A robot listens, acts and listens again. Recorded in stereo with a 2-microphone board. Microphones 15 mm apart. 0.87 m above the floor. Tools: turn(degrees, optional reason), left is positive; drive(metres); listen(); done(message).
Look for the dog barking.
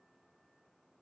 listen()
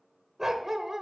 turn(degrees=-30, reason="The dog barking: about 30° right or 150° right.")
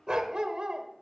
turn(degrees=-115, reason="So it is at 115° right.")
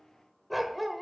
done("Facing the dog barking.")